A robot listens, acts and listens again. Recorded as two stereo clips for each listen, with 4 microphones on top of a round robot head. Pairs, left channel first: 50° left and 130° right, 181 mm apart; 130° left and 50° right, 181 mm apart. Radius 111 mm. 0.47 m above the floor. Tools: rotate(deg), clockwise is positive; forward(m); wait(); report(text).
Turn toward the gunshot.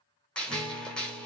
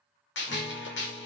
rotate(-135)
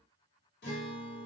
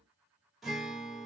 report("I heard a gunshot from this way, but can't make it out now.")